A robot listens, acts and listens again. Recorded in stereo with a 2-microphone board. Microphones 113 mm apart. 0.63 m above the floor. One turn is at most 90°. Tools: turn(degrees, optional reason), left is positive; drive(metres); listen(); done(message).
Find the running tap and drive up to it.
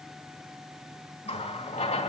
turn(degrees=90)
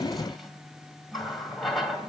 drive(metres=1.0)
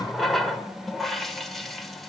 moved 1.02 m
drive(metres=1.0)
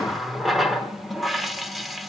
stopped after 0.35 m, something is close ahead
done("I am next to the running tap.")